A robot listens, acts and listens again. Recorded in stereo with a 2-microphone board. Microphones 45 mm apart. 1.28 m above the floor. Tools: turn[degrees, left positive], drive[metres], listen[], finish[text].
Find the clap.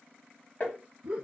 Action: listen[]
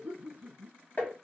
Action: listen[]
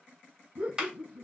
Action: turn[-30]
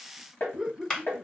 Thought: So it is at 15° left.
Action: turn[15]
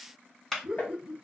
Action: finish[Found it: a clap, straight ahead.]